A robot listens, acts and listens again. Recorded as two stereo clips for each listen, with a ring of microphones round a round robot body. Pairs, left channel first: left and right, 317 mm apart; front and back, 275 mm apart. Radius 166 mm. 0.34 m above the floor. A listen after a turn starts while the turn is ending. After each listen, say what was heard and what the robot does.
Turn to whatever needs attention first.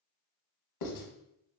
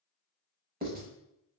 Keep listening.
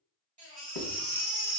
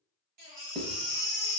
The baby crying: 160° right. Turn 160° right.
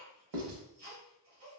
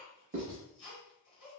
The baby crying is now 20° right. Turn 20° right.
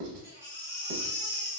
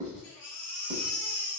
The baby crying is now 10° right. Turn 10° right.
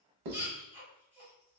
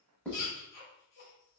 Facing the baby crying.